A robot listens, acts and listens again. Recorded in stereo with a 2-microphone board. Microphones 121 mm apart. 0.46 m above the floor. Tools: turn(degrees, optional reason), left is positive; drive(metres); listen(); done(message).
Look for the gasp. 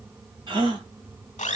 turn(degrees=-40, reason="The gasp: about 40° right or 140° right.")
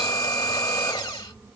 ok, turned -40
listen()
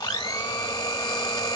done("I heard a gasp, but can't make it out now. It was about straight ahead or 100° right.")